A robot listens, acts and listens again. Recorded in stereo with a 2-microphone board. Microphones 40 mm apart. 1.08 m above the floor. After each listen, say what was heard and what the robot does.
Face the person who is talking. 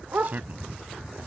The man speaking: about 45° right or 135° right. Turn 45° right.
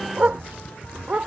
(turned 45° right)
Keep listening.
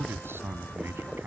So it is at 95° right. Turn 95° right.
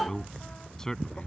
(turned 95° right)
The man speaking is now 15° left. Turn 15° left.
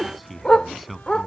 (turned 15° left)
Facing the man speaking.